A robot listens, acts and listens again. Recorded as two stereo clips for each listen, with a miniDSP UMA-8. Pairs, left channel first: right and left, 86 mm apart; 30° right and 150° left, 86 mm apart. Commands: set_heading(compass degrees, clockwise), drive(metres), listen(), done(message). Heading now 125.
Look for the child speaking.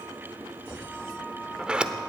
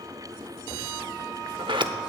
listen()
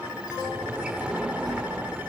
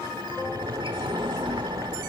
set_heading(355)
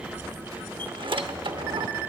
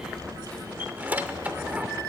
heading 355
set_heading(310)
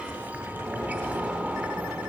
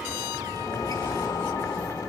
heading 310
set_heading(330)
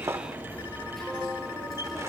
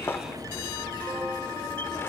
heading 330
done("Facing the child speaking.")